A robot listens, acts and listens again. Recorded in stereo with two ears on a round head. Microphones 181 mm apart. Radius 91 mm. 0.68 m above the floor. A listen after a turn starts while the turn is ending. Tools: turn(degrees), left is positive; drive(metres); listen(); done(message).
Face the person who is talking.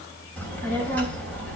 turn(degrees=30)
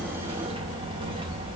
turn(degrees=-25)
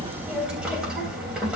done("Facing the child speaking, 2 to 4 m away.")